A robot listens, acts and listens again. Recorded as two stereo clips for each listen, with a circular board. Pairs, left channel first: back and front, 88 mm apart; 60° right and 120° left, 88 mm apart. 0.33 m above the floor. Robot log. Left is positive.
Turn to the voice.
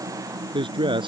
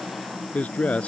note: The man speaking: 15° left.
cmd yaw +15
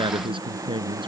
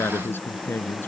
end: Found it: a man speaking, straight ahead.